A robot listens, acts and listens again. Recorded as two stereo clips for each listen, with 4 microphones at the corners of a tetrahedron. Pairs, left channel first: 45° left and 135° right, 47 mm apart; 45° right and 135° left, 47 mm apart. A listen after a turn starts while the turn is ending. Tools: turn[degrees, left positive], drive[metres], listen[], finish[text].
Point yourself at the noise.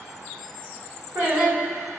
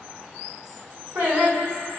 Thought: The singing: straight behind.
Action: turn[180]
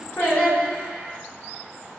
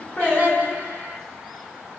Action: finish[Found it: singing, straight ahead.]